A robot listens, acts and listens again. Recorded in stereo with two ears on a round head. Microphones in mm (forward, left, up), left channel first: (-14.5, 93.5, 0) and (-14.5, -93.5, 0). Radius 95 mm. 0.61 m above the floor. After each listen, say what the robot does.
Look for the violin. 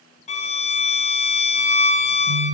Turn 30° left.
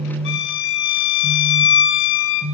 Turn 120° left.
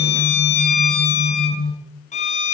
Turn 35° left.
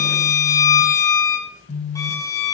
Turn 15° left.
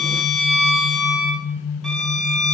Facing the violin.